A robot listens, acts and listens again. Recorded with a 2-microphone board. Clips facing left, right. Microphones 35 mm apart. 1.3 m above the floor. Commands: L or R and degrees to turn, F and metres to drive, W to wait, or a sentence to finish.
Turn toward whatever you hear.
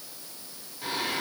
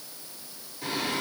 L30
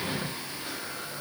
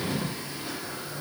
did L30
L135
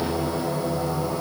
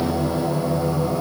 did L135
R15
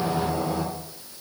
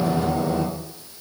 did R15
Facing the singing.